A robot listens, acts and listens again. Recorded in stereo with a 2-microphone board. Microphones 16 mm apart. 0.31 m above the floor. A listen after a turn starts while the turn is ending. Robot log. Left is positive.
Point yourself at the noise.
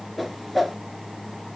cmd yaw -30
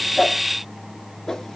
note: So it is at 25° left.
cmd yaw +25
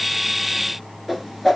note: The whoosh is now 10° right.
cmd yaw -10
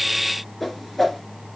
end: Found it: a whoosh, straight ahead.